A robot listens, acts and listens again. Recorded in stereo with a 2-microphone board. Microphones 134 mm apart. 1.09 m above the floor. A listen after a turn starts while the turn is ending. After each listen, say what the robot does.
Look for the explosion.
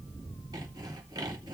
Keep listening.
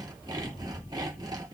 Keep listening.
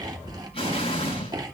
Turn 45° left.
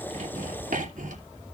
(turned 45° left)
Keep listening.
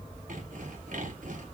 I heard an explosion, but can't make it out now. It was about straight ahead or 90° left.